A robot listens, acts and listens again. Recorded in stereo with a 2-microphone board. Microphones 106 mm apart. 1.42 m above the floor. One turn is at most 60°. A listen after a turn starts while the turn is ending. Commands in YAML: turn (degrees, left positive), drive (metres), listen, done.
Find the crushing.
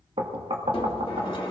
turn: 60
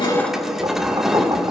done: "Found it: crushing, straight ahead, 1 to 2 m away."